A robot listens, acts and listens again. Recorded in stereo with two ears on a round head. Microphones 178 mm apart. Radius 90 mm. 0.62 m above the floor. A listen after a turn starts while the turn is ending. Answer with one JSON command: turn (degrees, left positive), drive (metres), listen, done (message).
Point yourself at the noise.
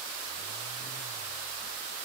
{"listen": true}
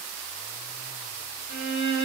{"turn": 50}
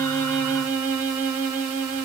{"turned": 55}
{"done": "Found it: a violin, straight ahead."}